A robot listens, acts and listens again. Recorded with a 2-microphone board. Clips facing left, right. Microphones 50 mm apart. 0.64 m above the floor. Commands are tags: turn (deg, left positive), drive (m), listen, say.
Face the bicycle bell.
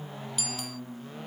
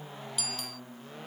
<turn deg="30"/>
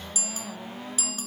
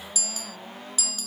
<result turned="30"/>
<turn deg="150"/>
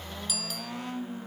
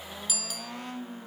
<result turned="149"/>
<say>Facing the bicycle bell.</say>